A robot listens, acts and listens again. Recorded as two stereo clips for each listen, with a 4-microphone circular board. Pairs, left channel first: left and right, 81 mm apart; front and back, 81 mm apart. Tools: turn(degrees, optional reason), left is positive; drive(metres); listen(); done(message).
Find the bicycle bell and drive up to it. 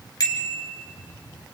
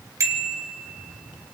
turn(degrees=125, reason="The bicycle bell: 125° left.")
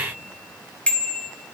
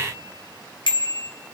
turn(degrees=15, reason="The bicycle bell is now 15° left.")
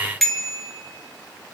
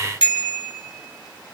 drive(metres=1.0)
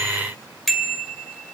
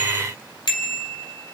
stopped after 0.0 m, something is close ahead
done("Something is in my way. I am facing the bicycle bell but have not reached it.")